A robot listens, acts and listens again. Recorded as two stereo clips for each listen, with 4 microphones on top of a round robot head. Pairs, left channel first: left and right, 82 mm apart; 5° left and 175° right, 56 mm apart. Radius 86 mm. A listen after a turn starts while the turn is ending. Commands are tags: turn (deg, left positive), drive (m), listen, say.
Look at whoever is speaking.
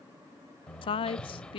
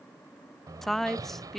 <turn deg="90"/>
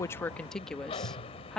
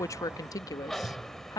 <say>Found it: a woman speaking, straight ahead.</say>